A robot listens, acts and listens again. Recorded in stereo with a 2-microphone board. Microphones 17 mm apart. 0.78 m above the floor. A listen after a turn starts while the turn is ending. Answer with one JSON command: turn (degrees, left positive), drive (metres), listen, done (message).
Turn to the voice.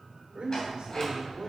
{"turn": -75}
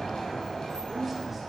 {"turn": -20}
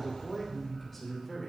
{"done": "Found it: a man speaking, straight ahead, 2 to 4 m away."}